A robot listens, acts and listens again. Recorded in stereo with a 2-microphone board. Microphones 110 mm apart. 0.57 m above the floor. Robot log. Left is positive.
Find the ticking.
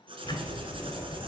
note: The ticking: about 40° left or 140° left.
cmd yaw +40
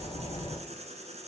note: So it is at 90° left.
cmd yaw +90
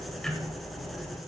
end: Found it: ticking, straight ahead, 1 to 2 m away.